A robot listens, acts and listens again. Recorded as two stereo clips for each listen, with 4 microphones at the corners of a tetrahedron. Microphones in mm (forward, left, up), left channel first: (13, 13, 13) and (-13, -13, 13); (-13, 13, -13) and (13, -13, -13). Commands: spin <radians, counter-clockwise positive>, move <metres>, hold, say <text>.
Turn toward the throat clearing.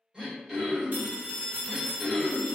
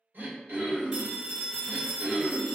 spin -1.13
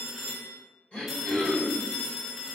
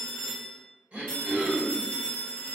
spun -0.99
spin -0.17
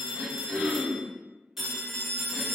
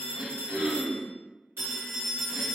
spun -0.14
say Found it: throat clearing, straight ahead.